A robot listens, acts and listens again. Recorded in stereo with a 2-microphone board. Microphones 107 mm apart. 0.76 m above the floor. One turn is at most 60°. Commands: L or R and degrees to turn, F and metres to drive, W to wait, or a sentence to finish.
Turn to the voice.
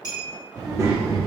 R30
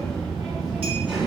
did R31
Facing the child speaking, 1 to 2 m away.